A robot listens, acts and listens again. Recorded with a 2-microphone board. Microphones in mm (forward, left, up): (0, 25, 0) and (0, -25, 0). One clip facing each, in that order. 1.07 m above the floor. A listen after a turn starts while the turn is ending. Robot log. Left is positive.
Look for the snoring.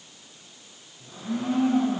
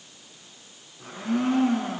cmd idle
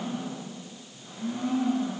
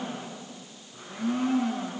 cmd idle
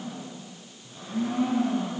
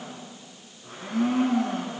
end: I can't make out snoring to turn to.